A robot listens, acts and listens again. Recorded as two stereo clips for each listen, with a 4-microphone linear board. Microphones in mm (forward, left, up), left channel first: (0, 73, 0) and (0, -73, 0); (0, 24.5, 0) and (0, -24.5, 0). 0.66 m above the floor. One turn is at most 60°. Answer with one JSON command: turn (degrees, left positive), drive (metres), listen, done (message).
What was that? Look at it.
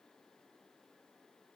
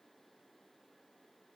{"listen": true}
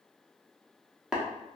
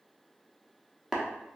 {"turn": -30}
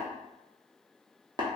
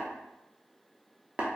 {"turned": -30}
{"turn": -60}
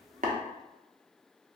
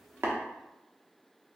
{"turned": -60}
{"turn": -60}
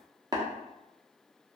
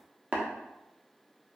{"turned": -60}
{"turn": -30}
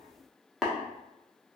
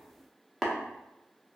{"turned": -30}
{"done": "Facing the tapping, under 1 m away."}